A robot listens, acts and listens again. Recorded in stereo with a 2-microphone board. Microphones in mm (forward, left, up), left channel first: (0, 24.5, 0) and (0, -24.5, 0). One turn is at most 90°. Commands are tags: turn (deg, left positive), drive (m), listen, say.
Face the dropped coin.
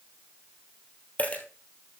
<turn deg="35"/>
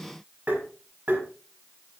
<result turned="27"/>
<listen/>
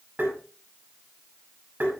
<say>I heard a dropped coin, but can't make it out now. It was about 5° left or 120° left.</say>